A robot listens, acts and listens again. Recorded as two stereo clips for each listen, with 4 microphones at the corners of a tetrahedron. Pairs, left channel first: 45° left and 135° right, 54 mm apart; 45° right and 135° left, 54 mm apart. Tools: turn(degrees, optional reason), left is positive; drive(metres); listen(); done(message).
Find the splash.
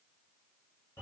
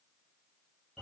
listen()
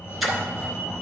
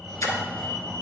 turn(degrees=-45, reason="The splash: 45° right.")
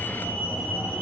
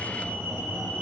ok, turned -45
done("Facing where the splash came from. I can't hear it now.")